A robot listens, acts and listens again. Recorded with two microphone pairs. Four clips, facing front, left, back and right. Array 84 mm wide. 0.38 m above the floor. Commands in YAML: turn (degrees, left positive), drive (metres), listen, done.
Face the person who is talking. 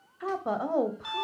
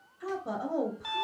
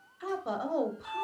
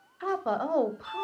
turn: -75
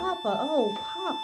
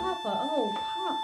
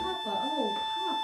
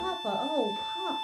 done: "Facing the woman speaking."